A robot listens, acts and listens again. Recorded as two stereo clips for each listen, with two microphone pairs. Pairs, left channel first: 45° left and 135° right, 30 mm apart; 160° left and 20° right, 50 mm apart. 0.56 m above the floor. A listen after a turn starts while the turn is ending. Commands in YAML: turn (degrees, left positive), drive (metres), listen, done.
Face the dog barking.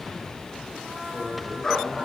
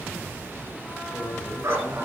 turn: -30
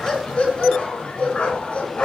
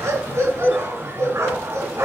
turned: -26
done: "Facing the dog barking, 2 to 4 m away."